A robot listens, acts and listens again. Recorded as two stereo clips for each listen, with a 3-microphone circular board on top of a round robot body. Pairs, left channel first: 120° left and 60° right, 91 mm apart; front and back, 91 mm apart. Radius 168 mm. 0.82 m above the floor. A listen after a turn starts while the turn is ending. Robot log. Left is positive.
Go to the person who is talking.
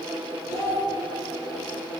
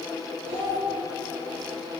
note: The child speaking: straight behind.
cmd yaw +180
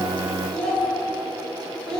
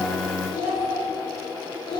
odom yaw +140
note: The child speaking is now 40° left.
cmd yaw +40
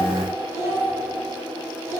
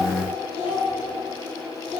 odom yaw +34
cmd fwd 1.0
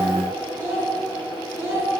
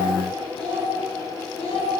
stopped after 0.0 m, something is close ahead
note: The child speaking is now 10° left.
cmd yaw +10
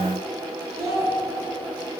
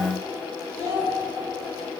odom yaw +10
end: Something is in my way. I am facing the child speaking but have not reached it.